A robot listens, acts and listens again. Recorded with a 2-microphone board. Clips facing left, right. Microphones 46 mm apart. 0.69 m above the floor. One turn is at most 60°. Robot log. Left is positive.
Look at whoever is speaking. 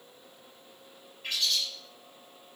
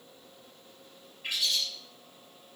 cmd idle
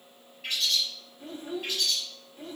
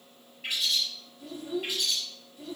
note: The child speaking: about 40° left or 140° left.
cmd yaw +40
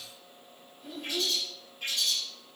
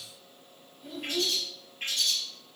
end: Facing the child speaking.